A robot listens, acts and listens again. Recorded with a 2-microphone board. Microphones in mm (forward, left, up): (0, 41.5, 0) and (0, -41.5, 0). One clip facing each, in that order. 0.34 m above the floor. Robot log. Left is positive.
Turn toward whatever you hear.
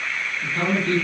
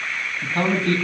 note: The man speaking: about 60° right or 120° right.
cmd yaw -60
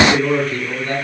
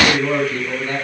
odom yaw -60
end: Found it: a man speaking, straight ahead, 2 to 4 m away.